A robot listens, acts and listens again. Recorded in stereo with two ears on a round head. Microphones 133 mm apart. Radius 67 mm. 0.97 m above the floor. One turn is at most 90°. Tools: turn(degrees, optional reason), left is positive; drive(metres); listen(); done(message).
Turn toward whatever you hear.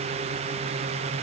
listen()
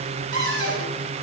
turn(degrees=-90)
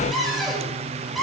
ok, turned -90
done("Facing the cupboard door.")